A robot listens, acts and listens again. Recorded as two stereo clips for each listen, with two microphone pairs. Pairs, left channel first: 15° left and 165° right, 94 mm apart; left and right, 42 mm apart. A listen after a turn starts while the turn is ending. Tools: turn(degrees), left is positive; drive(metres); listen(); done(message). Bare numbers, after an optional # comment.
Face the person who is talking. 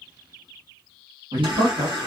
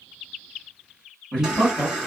# The man speaking: 155° left.
turn(155)
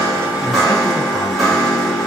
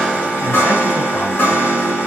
listen()
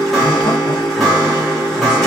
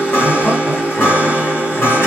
listen()
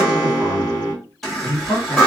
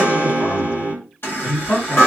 # The man speaking is now 60° left.
turn(60)
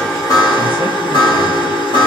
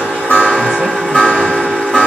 listen()
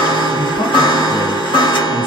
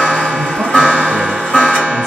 done("Found it: a man speaking, straight ahead, 1 to 2 m away.")